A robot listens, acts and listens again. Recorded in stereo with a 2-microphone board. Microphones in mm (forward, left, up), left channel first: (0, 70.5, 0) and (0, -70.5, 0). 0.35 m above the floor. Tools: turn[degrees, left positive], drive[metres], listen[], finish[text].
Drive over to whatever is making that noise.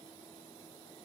Action: listen[]
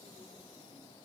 Action: listen[]
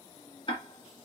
Thought: The ticking: about 40° left or 140° left.
Action: turn[40]
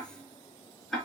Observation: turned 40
Action: drive[1.0]
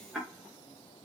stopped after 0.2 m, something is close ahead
Action: finish[Blocked. The ticking is further on, straight ahead.]